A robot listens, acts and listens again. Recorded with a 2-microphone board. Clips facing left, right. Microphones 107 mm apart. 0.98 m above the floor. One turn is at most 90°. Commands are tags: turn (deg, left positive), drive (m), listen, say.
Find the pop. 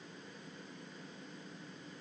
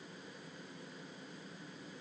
<listen/>
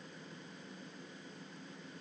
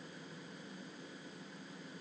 <listen/>
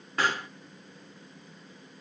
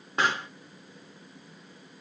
<turn deg="-25"/>
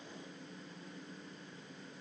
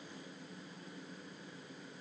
<listen/>
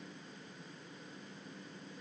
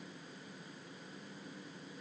<say>I heard a pop, but can't make it out now. It was about straight ahead or 130° right.</say>